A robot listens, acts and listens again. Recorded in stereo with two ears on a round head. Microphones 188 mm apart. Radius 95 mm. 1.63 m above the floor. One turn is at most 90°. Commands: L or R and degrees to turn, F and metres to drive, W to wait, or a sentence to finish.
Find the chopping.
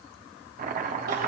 R40
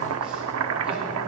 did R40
R90
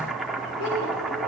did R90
Found it: chopping, straight ahead, under 1 m away.